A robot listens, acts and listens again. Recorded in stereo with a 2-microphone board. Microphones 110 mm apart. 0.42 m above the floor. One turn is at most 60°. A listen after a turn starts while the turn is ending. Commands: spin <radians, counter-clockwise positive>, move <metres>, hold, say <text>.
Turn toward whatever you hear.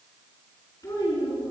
spin 0.52
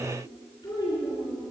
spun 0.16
spin 0.61
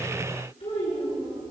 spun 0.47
spin 1.05
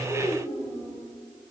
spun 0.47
spin 1.05
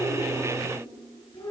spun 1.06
spin 0.70
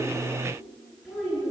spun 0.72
say Facing the child speaking.